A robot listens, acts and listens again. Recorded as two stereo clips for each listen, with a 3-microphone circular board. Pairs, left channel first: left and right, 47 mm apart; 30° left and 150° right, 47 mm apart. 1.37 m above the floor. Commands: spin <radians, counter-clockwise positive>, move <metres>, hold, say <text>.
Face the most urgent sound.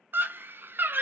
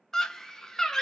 spin -0.87
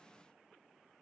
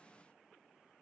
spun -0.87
hold
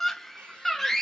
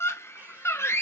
spin 0.17
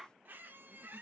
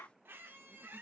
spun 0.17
hold
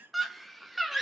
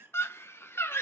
say Facing the scream.